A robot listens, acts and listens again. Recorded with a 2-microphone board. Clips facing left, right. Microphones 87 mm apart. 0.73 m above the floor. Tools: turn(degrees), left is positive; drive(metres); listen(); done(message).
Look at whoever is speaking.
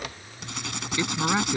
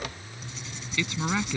turn(degrees=25)
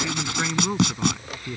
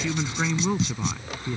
done("Facing the woman speaking.")